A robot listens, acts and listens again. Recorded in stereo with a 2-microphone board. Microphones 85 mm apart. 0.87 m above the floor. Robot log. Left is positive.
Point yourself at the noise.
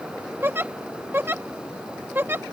note: The giggle: about 25° right or 155° right.
cmd yaw -25
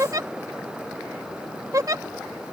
note: So it is at 125° right.
cmd yaw -125
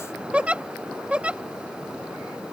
note: The giggle is now 15° right.
cmd yaw -15
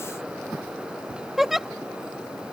end: Found it: a giggle, straight ahead.